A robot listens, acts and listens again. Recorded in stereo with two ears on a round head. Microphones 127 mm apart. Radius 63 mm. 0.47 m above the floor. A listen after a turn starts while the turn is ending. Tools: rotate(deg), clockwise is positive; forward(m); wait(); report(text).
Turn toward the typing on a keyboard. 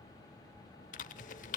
rotate(-60)
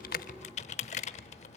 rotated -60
rotate(-55)
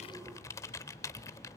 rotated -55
rotate(-25)
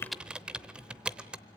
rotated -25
report("Facing the typing on a keyboard.")